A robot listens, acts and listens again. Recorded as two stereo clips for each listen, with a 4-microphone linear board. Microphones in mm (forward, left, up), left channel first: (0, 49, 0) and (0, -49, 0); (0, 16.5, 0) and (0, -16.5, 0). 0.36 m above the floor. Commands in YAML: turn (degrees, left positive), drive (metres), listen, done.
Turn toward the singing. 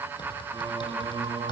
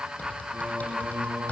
turn: -70
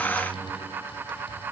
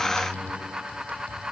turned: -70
turn: -15
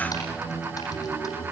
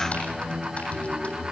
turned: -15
turn: 35
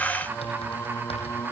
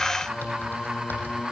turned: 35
turn: 25
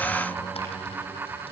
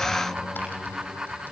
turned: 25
done: "Facing the singing, 1 to 2 m away."